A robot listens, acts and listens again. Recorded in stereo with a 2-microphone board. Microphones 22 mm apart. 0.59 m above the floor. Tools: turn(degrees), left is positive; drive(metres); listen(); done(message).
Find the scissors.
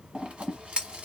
turn(degrees=-55)
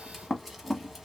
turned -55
turn(degrees=-10)
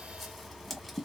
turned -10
done("Facing the scissors, under 1 m away.")